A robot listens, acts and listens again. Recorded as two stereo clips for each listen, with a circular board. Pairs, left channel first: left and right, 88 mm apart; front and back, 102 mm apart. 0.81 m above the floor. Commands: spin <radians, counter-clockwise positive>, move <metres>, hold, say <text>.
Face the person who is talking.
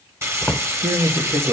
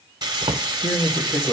spin -1.22
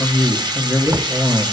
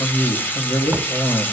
say Found it: a man speaking, straight ahead.